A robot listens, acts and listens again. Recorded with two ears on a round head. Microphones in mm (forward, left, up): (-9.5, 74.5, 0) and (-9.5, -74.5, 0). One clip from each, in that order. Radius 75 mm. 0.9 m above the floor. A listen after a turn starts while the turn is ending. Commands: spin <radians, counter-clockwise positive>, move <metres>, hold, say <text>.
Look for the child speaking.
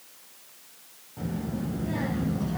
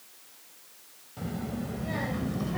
spin -0.96
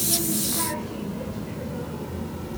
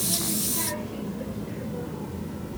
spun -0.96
spin 0.35
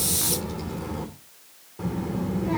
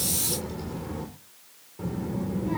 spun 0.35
spin 0.61
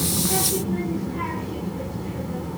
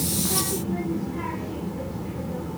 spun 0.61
say Found it: a child speaking, straight ahead.